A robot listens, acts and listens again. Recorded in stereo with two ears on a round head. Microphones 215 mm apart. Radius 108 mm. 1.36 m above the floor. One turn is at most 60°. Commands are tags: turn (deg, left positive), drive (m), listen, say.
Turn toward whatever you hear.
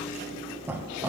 <turn deg="-30"/>
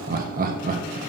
<turn deg="-60"/>
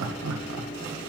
<turn deg="-60"/>
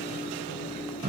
<turn deg="-30"/>
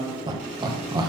<turn deg="-20"/>
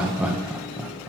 <say>Facing the laughter, 1 to 2 m away.</say>